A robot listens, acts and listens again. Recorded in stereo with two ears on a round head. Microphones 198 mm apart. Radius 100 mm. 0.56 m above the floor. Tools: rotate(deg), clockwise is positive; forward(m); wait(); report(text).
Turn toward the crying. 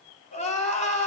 rotate(-30)
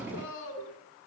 rotate(-115)
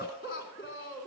rotate(-45)
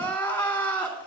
rotate(-10)
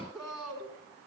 report("Found it: crying, straight ahead, 2 to 4 m away.")